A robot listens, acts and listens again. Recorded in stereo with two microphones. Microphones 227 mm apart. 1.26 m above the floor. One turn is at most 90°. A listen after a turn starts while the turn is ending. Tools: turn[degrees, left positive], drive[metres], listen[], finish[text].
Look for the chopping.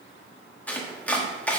Action: turn[30]
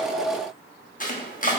Thought: So it is at 145° left.
Action: turn[90]
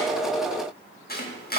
Thought: The chopping is now 45° left.
Action: turn[45]
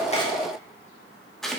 Action: finish[Facing the chopping.]